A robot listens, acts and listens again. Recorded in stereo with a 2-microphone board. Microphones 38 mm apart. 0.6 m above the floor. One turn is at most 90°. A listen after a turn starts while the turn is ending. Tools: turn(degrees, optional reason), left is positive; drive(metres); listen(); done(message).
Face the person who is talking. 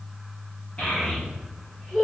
turn(degrees=35, reason="The child speaking: about 35° left or 145° left.")
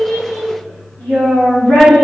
turn(degrees=90, reason="So it is at 105° left.")
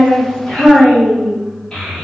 turn(degrees=25, reason="The child speaking is now 25° left.")
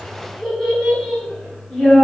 done("Facing the child speaking.")